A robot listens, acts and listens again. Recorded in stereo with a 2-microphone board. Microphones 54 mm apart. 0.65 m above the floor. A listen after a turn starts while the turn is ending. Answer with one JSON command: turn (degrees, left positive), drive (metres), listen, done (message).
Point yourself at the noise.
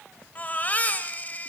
{"turn": 30}
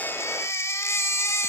{"turn": 120}
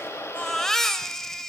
{"turn": 10}
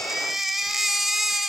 {"done": "Facing the baby crying."}